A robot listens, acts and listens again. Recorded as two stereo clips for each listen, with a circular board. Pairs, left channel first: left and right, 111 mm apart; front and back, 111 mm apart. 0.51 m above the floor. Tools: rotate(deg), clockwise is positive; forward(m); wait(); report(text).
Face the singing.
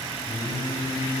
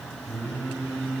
rotate(-100)
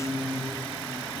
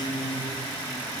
rotate(20)
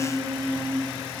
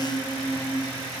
report("Found it: singing, straight ahead, over 4 m away.")